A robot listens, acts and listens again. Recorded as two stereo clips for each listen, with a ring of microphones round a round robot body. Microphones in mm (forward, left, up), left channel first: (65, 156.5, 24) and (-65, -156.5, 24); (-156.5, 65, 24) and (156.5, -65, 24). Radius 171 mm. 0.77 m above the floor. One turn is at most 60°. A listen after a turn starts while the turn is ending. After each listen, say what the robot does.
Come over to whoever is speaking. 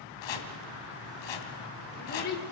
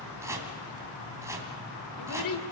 Turn 60° left.
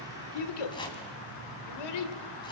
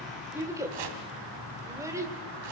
Turn 60° left.
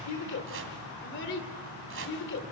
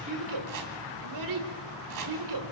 Turn 10° left.
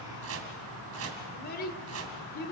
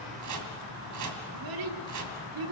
Drive 1.0 m forward.
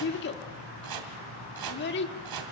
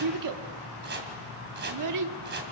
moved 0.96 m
Turn 10° left.
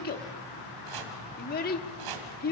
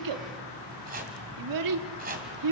Drive 1.0 m forward.
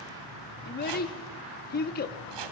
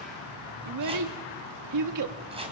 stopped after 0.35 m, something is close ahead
Arrived at the child speaking, straight ahead.